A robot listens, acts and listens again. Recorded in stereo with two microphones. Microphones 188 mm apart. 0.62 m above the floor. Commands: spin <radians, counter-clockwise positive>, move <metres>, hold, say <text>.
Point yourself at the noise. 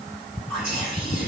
spin 0.52
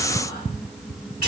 spin 2.01
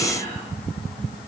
hold
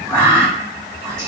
spin -0.35
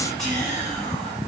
say Found it: whispering, straight ahead, 1 to 2 m away.